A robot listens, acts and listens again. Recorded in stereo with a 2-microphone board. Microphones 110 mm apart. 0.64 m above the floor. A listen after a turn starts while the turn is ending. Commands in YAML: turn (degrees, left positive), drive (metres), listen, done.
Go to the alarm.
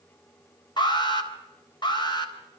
turn: 45
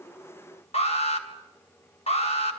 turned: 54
turn: 80
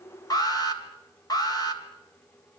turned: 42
turn: 40
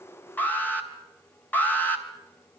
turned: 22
turn: 15
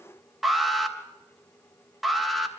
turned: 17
drive: 1.0
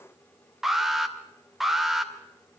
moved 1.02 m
drive: 1.0
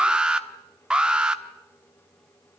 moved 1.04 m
turn: -10
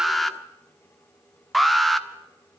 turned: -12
drive: 1.0
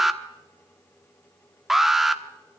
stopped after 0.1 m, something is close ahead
done: "Arrived at the alarm, straight ahead."